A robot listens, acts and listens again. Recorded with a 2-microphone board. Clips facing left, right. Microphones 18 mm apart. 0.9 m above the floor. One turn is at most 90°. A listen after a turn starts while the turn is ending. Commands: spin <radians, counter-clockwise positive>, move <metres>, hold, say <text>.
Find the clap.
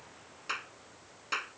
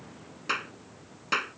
spin -0.44
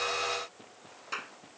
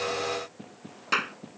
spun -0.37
spin -1.57
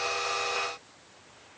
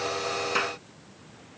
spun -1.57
spin -0.70
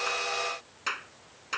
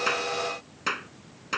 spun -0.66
say Found it: a clap, straight ahead.